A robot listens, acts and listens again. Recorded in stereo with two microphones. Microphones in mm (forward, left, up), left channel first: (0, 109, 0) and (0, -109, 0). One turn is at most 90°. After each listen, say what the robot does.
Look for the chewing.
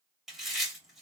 Turn 30° left.
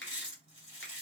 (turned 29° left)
Turn 90° left.
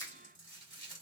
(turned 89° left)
Turn 65° left.
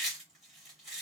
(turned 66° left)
Facing the chewing, 2 to 4 m away.